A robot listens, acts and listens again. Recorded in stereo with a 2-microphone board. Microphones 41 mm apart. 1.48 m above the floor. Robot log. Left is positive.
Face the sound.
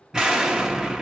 cmd yaw -30
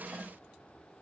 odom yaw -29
cmd idle
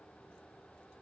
end: I heard an explosion, but can't make it out now. It was about 15° left or 140° right.